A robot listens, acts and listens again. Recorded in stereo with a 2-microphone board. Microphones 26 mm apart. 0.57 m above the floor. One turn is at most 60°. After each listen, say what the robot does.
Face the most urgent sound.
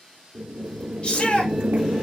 Turn 40° left.
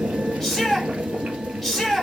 Turn 10° left.
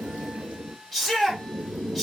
Facing the shout, 2 to 4 m away.